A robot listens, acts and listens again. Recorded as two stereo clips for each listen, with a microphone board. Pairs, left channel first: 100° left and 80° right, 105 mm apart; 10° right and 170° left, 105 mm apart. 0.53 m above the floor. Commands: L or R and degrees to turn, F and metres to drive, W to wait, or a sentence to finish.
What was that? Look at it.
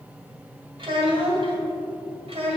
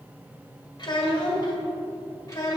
R65
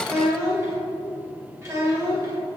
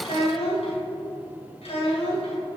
R20
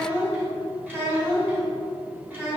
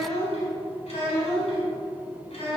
R10
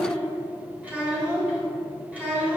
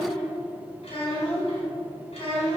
Found it: a child speaking, straight ahead, 2 to 4 m away.